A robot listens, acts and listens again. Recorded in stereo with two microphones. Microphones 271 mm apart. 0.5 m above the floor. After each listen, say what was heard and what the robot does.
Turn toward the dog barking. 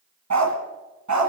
Turn 90° right.
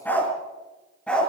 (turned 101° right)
Found it: a dog barking, straight ahead, 2 to 4 m away.